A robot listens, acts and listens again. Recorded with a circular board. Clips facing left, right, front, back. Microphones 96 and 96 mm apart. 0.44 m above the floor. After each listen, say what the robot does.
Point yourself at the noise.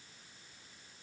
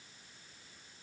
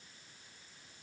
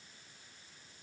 Keep listening.
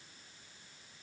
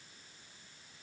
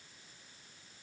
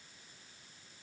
Keep listening.
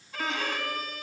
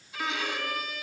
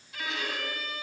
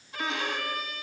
Turn 125° left.
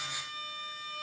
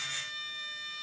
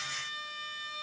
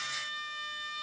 Turn 55° left.
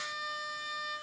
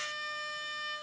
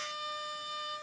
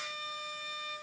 Turn 10° left.
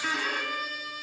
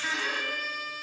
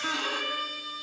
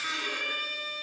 Found it: a violin, straight ahead.